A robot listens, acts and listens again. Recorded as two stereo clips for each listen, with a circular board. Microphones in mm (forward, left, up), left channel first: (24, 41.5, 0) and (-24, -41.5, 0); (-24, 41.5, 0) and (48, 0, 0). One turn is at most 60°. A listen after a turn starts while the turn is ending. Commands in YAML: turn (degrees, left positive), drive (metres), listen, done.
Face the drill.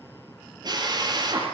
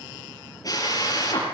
turn: -60
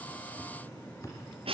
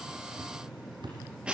turn: -60
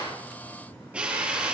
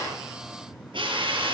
turn: -45
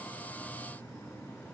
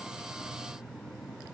listen: true
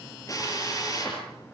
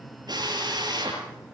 done: "Found it: a drill, straight ahead."